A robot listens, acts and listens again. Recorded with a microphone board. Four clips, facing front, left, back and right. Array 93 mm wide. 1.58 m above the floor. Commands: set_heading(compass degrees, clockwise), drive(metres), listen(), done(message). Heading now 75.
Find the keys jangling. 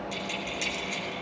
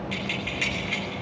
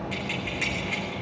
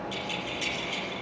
set_heading(310)
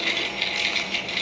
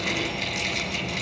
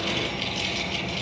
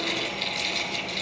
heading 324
set_heading(309)
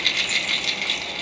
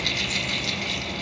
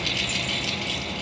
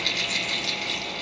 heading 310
done("Found it: keys jangling, straight ahead, 2 to 4 m away.")